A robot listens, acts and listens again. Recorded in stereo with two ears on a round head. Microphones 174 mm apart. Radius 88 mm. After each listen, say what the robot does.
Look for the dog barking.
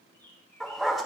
Turn 30° left.
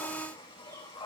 Keep listening.
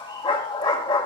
Turn 150° left.
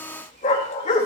Turn 45° left.
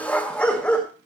Turn 10° left.
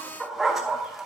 Facing the dog barking, 2 to 4 m away.